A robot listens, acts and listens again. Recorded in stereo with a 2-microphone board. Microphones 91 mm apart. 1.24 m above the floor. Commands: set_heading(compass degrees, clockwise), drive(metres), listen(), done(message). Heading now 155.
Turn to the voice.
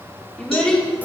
set_heading(125)
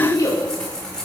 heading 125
set_heading(345)
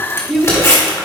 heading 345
done("Facing the child speaking.")